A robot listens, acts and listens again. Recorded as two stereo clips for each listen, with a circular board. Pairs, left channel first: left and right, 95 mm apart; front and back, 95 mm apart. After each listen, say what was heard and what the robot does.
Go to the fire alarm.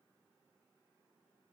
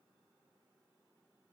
Keep listening.
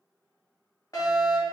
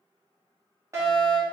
The fire alarm: 135° left. Turn 135° left.
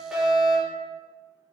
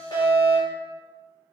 Drive 1.0 m forward.
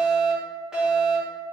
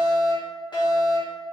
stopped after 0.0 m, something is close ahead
The fire alarm is now 10° right. Turn 10° right.
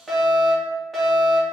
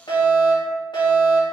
Blocked. The fire alarm is further on, straight ahead.